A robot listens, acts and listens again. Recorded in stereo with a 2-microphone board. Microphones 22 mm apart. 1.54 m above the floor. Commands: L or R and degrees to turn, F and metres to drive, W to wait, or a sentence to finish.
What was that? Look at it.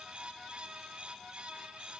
W
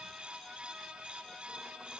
W
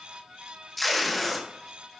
L30
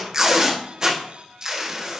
R25
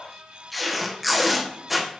Facing the tape being pulled.